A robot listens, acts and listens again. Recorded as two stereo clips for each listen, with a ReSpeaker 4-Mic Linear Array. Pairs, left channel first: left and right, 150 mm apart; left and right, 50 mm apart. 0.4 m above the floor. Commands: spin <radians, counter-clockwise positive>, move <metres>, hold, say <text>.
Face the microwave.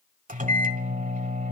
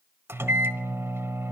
spin -1.05
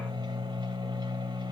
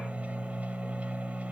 spin -0.61
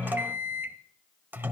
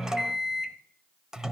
spin -0.26
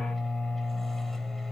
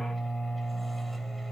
say Found it: a microwave, straight ahead, 1 to 2 m away.